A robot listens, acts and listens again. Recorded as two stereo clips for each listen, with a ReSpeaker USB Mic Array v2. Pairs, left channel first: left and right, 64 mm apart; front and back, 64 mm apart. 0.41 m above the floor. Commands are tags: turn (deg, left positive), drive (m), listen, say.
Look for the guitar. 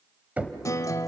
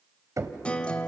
<turn deg="70"/>
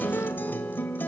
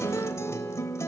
<turn deg="35"/>
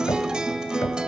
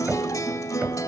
<turn deg="-15"/>
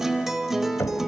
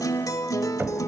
<say>Facing the guitar, 1 to 2 m away.</say>